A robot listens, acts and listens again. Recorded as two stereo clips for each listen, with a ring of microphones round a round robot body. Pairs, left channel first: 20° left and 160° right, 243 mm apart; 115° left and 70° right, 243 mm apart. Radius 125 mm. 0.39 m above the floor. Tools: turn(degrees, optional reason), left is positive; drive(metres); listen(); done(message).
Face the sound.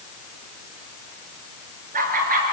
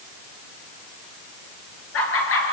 turn(degrees=150, reason="The laughter: 150° left.")
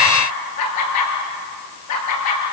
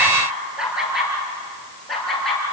turn(degrees=25, reason="The laughter is now 25° left.")
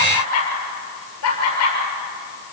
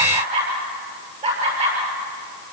done("Facing the laughter, over 4 m away.")